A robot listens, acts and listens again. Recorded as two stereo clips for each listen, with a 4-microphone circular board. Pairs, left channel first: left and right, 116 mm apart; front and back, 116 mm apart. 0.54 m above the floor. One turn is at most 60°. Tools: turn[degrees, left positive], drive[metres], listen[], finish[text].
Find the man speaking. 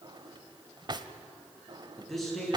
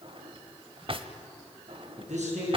Thought: The man speaking: straight behind.
Action: turn[60]
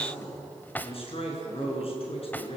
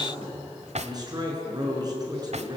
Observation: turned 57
Thought: The man speaking is now 125° left.
Action: turn[60]
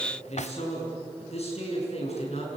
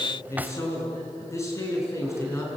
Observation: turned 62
Thought: The man speaking is now 65° left.
Action: turn[60]
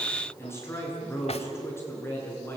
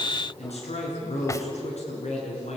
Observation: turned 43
Thought: The man speaking is now 20° left.
Action: turn[20]
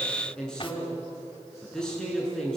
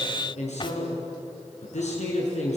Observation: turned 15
Action: finish[Facing the man speaking.]